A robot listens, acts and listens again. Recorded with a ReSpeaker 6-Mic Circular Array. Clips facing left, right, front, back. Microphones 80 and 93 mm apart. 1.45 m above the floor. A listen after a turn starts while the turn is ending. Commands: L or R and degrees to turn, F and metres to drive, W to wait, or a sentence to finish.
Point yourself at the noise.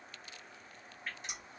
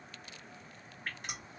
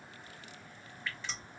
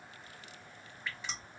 R105
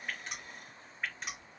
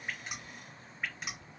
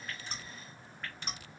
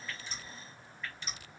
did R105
Found it: dripping, straight ahead, 1 to 2 m away.